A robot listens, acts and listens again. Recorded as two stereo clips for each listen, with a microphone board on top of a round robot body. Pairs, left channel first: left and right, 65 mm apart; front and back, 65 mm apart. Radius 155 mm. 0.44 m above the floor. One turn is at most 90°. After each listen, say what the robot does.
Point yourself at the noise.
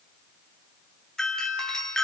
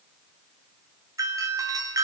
Turn 90° left.
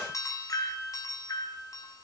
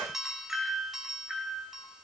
Turn 90° left.
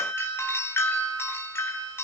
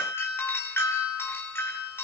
Turn 45° left.
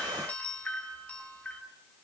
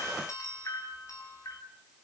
Turn 25° left.
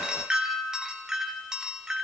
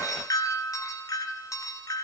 Turn 10° right.
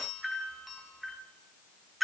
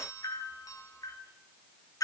Facing the doorbell, 2 to 4 m away.